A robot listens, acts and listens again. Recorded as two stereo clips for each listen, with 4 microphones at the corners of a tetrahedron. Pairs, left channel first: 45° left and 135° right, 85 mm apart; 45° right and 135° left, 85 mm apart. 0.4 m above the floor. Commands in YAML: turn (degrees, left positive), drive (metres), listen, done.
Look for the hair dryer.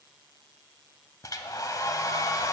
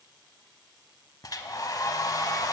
done: "Found it: a hair dryer, straight ahead."